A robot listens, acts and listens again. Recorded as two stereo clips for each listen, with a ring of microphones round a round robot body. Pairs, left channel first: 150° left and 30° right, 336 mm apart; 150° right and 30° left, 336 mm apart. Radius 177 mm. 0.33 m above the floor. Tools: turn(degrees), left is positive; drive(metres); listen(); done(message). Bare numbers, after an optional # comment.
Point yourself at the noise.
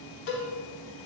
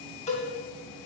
# The cowbell: 140° left.
turn(140)
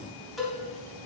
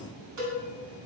# The cowbell is now 60° left.
turn(60)
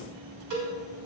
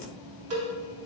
# The cowbell is now 10° right.
turn(-10)
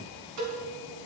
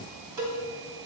done("Found it: a cowbell, straight ahead, 2 to 4 m away.")